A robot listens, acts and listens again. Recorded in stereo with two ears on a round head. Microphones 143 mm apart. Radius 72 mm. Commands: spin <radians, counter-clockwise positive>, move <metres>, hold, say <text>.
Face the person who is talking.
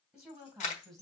spin 0.52
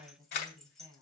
spin -0.35
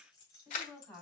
spin 0.17
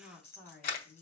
say Facing the woman speaking.